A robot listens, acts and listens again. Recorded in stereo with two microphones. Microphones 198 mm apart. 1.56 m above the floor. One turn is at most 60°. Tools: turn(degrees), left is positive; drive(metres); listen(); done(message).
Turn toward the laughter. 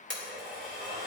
listen()
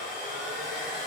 listen()
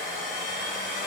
done("I can't make out laughter, only a blender.")